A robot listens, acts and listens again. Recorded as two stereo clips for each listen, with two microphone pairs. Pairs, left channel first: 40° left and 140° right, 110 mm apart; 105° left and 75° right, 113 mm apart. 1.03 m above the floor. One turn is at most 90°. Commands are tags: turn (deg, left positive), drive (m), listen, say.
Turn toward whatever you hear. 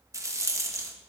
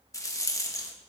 <turn deg="90"/>
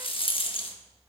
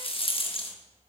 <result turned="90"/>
<turn deg="70"/>
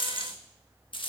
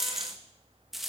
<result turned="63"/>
<say>Found it: a rattle, straight ahead, 1 to 2 m away.</say>